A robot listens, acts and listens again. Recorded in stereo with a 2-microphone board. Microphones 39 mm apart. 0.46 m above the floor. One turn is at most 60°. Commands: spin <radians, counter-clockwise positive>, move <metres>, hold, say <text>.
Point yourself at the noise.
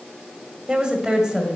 spin -0.35
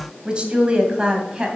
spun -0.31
spin -0.35
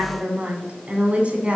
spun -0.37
spin -0.61
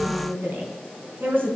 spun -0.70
spin -1.05
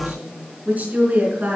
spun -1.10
spin -0.79
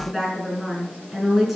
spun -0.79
say Facing the woman speaking.